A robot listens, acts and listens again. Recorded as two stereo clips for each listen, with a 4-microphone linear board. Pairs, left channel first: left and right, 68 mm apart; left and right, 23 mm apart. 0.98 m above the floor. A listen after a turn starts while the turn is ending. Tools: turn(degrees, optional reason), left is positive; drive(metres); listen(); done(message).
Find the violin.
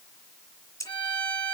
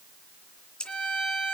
turn(degrees=90)
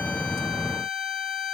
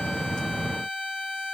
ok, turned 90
done("Found it: a violin, straight ahead, over 4 m away.")